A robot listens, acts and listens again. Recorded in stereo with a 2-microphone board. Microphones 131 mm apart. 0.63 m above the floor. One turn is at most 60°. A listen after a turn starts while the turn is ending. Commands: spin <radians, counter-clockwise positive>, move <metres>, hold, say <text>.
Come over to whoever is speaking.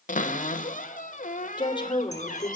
spin 0.61
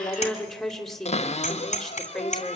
move 1.0
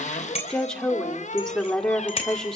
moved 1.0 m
move 1.0
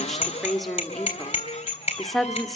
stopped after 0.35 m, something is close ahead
say Arrived at the woman speaking, straight ahead.